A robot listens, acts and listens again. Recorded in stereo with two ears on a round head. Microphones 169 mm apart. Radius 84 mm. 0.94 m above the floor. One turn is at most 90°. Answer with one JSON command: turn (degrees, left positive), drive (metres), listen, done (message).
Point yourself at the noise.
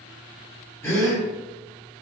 {"turn": 30}
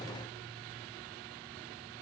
{"listen": true}
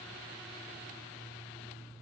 {"done": "I heard a gasp, but can't make it out now. It was about 15° right or 135° left."}